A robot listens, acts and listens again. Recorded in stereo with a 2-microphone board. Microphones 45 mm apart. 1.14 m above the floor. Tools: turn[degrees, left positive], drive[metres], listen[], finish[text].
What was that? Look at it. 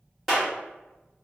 Action: turn[30]
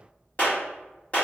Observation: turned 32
Thought: So it is at 145° left.
Action: turn[145]
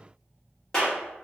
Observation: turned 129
Thought: The clap is now 15° left.
Action: turn[15]
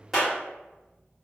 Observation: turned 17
Action: finish[Found it: a clap, straight ahead.]